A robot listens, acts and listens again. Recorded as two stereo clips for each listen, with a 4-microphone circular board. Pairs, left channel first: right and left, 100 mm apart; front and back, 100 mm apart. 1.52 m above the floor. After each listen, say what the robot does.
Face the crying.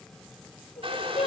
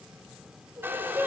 Turn 110° right.
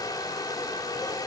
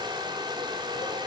Keep listening.
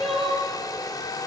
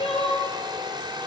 Found it: crying, straight ahead, over 4 m away.